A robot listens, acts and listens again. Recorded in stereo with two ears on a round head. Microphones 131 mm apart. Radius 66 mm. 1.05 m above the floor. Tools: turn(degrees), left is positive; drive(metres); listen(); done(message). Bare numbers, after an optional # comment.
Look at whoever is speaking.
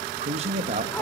# The man speaking: about 45° right or 135° right.
turn(-45)
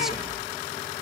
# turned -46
listen()
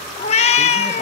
listen()
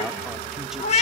done("I heard a man speaking, but can't make it out now. It was about straight ahead or 85° right.")